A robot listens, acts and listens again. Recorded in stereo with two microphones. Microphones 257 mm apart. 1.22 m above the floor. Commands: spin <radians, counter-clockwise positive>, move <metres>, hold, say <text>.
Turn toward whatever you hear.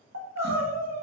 spin -1.57
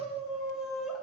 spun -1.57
say Facing the crying, 1 to 2 m away.